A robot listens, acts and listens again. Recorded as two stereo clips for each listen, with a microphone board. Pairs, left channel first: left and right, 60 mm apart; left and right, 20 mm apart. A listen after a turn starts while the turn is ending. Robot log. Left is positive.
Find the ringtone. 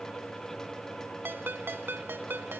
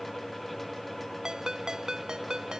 note: The ringtone: about 35° right or 145° right.
cmd yaw -35
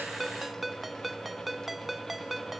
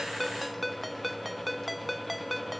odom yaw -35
end: Found it: a ringtone, straight ahead.